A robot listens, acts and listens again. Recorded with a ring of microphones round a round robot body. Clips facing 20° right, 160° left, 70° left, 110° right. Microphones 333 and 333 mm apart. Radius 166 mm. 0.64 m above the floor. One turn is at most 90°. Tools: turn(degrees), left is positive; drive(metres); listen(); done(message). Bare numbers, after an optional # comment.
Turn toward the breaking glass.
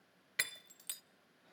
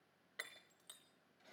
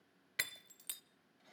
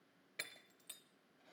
# The breaking glass: 15° left.
turn(15)
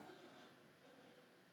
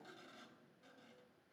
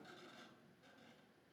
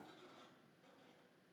done("Facing where the breaking glass came from. I can't hear it now.")